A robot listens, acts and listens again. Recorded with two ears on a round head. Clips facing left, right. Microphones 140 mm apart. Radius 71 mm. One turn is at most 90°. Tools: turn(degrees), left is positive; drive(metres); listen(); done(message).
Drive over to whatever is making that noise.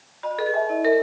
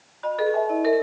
turn(degrees=30)
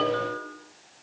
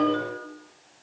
turn(degrees=-20)
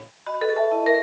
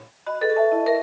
drive(metres=1.0)
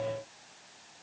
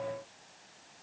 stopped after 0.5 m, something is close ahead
done("Blocked. The ringtone is further on, straight ahead.")